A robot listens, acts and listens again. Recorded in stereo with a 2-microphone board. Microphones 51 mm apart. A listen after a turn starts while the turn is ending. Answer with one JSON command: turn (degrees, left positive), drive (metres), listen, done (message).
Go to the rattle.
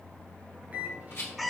{"turn": 60}
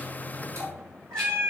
{"listen": true}
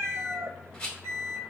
{"turn": 15}
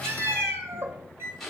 {"drive": 1.0}
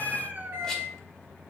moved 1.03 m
{"listen": true}
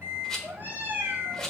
{"turn": 15}
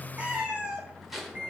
{"drive": 1.0}
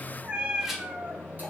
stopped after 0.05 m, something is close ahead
{"listen": true}
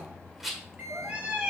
{"done": "Arrived at the rattle, straight ahead."}